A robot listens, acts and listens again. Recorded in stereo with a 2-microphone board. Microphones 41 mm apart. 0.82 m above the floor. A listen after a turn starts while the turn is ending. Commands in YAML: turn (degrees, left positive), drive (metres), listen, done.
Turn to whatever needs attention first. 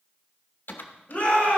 turn: 35
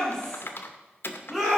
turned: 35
done: "Facing the shout, over 4 m away."